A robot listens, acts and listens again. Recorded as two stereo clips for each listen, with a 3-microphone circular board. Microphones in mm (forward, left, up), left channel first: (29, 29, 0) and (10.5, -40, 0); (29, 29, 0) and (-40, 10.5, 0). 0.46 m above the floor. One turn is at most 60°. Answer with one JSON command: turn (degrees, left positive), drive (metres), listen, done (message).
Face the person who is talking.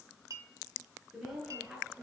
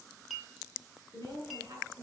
{"turn": 60}
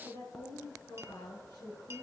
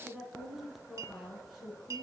{"turn": 60}
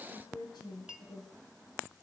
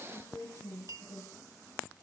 {"turn": 60}
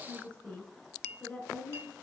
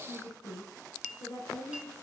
{"done": "Facing the woman speaking, over 4 m away."}